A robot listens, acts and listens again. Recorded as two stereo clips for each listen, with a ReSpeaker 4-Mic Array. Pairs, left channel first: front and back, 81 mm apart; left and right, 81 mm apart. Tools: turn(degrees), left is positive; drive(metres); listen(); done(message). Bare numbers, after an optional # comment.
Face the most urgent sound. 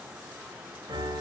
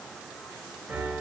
listen()
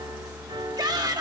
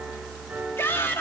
# The shout: 150° left.
turn(150)
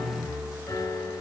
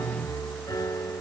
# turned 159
# Nothing new. It was at 10° right.
turn(-10)
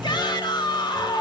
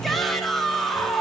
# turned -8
done("Facing the shout.")